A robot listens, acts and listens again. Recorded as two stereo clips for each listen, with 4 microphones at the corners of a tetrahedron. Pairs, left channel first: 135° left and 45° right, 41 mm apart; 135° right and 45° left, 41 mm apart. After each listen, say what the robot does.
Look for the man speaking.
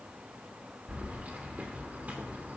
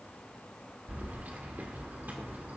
Keep listening.
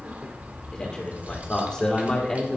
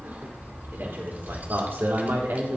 Turn 60° left.
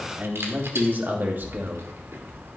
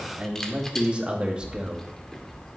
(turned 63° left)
Turn 15° right.
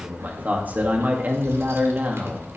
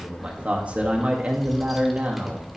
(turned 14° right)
Facing the man speaking, 2 to 4 m away.